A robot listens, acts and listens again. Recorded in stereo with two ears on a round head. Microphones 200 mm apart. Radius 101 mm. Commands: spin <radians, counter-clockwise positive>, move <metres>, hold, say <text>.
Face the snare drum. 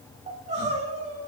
hold
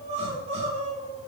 hold
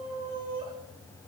say I can't make out a snare drum, only crying.